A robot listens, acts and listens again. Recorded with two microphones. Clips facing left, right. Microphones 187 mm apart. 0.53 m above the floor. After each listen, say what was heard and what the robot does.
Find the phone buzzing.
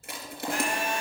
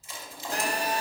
The phone buzzing: about 40° right or 140° right. Turn 40° right.
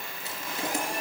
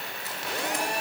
So it is at 100° right. Turn 100° right.
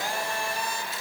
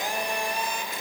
The phone buzzing is now 20° right. Turn 20° right.
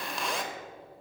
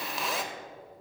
Found it: a phone buzzing, straight ahead, under 1 m away.